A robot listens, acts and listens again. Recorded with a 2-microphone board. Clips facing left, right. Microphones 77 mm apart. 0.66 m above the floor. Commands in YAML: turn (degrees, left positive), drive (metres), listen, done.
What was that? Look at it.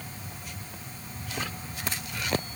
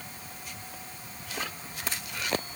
listen: true
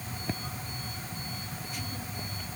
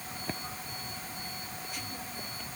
listen: true
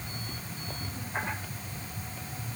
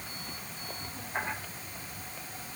done: "I can't make out anything to turn to."